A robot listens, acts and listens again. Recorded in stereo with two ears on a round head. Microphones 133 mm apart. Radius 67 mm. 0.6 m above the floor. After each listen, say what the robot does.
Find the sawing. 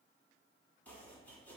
Keep listening.
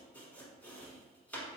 Keep listening.
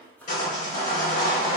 Turn 50° left.
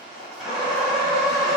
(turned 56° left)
Found it: sawing, straight ahead, 1 to 2 m away.